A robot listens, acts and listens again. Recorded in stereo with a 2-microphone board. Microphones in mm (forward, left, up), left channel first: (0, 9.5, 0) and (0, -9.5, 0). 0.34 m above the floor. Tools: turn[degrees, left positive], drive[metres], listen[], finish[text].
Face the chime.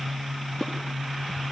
Action: listen[]
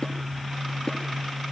Action: listen[]
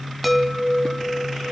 Action: turn[30]
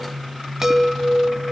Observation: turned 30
Thought: So it is at 25° right.
Action: turn[-25]
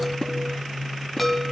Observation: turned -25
Action: finish[Facing the chime, 2 to 4 m away.]